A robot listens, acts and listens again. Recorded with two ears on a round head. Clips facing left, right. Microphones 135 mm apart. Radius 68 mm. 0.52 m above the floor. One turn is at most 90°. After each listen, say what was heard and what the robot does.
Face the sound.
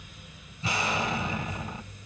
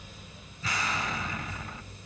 The explosion: about 25° left or 155° left. Turn 25° left.
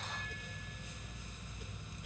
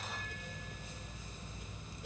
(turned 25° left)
Keep listening.
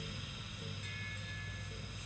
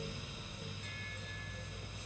I heard an explosion, but can't make it out now. It was about straight ahead or 130° left.